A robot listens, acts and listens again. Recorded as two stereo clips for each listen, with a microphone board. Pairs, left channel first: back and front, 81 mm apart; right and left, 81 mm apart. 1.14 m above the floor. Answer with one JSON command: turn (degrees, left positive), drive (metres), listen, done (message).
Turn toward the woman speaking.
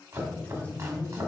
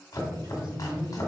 {"turn": 100}
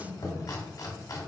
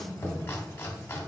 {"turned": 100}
{"listen": true}
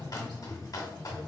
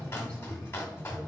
{"turn": -20}
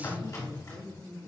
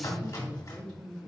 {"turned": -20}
{"turn": -15}
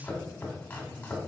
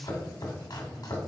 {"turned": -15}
{"listen": true}
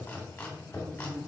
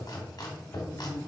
{"turn": -10}
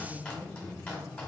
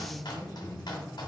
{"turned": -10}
{"done": "Facing the woman speaking, 2 to 4 m away."}